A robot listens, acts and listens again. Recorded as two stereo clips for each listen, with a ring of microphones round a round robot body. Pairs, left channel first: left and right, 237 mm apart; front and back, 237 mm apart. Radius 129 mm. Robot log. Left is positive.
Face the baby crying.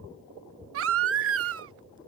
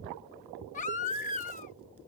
note: The baby crying: 60° right.
cmd yaw -60
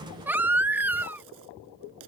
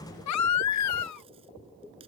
end: Facing the baby crying.